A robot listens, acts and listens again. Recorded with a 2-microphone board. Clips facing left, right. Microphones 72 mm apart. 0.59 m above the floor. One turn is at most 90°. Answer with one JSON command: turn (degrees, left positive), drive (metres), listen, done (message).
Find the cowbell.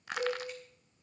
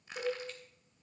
{"turn": -45}
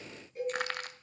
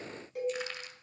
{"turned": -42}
{"turn": -90}
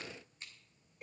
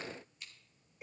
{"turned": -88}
{"done": "Facing the cowbell, over 4 m away."}